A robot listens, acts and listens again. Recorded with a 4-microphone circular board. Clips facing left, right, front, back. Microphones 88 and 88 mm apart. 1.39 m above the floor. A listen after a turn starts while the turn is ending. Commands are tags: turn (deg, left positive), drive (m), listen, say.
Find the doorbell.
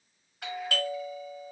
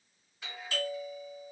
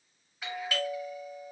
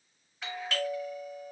<turn deg="80"/>
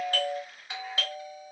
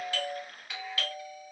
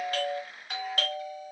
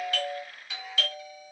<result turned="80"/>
<turn deg="25"/>
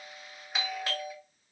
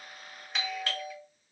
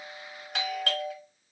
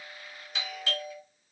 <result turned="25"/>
<say>Found it: a doorbell, straight ahead, 1 to 2 m away.</say>